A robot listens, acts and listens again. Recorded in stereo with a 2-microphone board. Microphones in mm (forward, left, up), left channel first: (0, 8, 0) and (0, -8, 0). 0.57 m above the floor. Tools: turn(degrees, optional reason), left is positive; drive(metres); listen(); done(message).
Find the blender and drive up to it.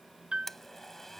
turn(degrees=20, reason="The blender: about 20° left or 160° left.")
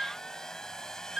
turn(degrees=145, reason="So it is at 145° left.")
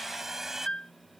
turn(degrees=-20, reason="The blender is now 20° right.")
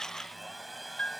drive(metres=1.0)
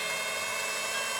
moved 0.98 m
drive(metres=1.0)
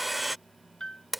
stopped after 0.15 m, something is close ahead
turn(degrees=-10, reason="The blender is now 10° right.")
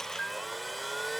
done("Arrived at the blender, straight ahead.")